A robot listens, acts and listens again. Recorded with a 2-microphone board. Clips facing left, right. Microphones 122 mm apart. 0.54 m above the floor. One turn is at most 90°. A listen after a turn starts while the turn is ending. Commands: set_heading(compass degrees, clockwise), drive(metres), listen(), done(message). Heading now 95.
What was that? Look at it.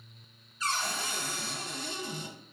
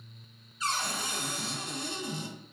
set_heading(110)
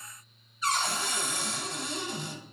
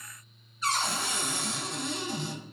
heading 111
done("Facing the cupboard door, 1 to 2 m away.")